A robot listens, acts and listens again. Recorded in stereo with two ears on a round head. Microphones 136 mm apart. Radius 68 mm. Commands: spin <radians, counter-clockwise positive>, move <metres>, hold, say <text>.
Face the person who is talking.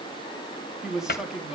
spin -0.52
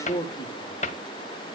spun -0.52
spin 0.52
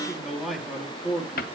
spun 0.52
say Facing the man speaking, 2 to 4 m away.